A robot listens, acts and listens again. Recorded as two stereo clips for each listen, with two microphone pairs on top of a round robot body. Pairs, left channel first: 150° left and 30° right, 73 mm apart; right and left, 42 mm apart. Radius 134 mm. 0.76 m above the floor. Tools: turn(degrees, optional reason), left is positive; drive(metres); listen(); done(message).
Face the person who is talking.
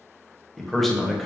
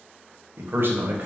turn(degrees=55, reason="The man speaking: 55° left.")
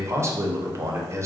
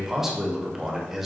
done("Found it: a man speaking, straight ahead.")